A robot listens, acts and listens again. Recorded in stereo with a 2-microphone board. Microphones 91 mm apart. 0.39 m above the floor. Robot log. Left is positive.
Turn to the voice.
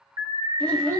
cmd yaw +30
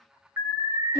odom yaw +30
note: So it is at 140° left.
cmd yaw +140
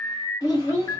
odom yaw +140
note: The child speaking is now 55° left.
cmd yaw +55
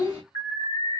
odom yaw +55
note: The child speaking is now 10° right.
cmd yaw -10
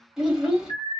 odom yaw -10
end: Found it: a child speaking, straight ahead, 1 to 2 m away.